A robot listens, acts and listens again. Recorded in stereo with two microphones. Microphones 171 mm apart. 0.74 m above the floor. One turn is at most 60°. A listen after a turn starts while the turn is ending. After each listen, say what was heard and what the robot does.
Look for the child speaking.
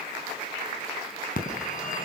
Keep listening.
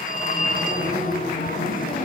Keep listening.
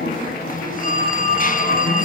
I can't make out a child speaking, only a phone ringing.